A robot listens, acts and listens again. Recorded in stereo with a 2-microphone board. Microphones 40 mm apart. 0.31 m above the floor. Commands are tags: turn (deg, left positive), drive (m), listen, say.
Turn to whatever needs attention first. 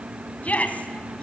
<turn deg="40"/>
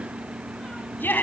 <turn deg="95"/>
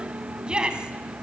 <turn deg="-25"/>
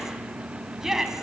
<turn deg="-15"/>
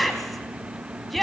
<say>Found it: a shout, straight ahead.</say>